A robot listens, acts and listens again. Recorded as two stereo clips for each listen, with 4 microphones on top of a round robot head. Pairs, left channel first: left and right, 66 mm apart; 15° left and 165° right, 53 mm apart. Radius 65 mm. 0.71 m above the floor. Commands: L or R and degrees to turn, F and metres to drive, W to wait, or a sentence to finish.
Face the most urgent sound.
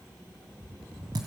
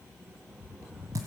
W
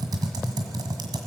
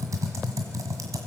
W
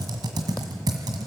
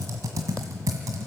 I can't make out anything urgent, only typing on a keyboard.